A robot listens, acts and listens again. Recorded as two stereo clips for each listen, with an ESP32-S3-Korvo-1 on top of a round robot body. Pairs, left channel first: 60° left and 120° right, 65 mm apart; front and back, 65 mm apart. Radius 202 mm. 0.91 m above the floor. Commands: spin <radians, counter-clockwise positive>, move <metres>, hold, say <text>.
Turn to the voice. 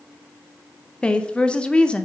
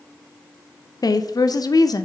spin -0.26
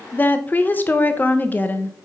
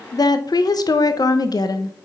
say Facing the woman speaking.